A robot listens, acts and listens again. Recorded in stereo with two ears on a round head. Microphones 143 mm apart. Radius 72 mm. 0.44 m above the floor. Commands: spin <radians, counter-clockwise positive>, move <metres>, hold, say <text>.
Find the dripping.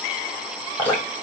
spin 0.52
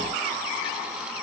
hold
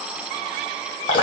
spin 2.36
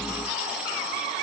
hold
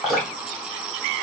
say Facing the dripping, 2 to 4 m away.